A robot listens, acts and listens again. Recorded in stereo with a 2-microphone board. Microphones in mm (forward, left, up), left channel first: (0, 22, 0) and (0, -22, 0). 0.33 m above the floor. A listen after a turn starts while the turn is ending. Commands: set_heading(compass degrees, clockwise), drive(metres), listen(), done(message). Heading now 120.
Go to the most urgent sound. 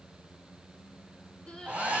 set_heading(105)
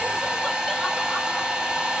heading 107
listen()
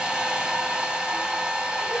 listen()
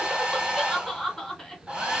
drive(1.0)
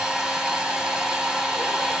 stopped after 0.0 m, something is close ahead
listen()
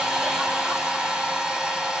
listen()
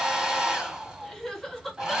done("Blocked. The crying is further on, straight ahead.")